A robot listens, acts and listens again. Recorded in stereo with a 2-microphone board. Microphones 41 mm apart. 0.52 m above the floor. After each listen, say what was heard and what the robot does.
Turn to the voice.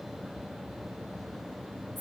Keep listening.
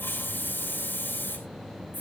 Keep listening.
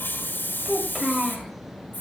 Turn 30° right.
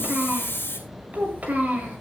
So it is at 140° right. Turn 140° right.
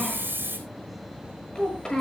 The child speaking is now 20° left. Turn 20° left.
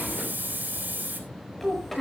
Found it: a child speaking, straight ahead.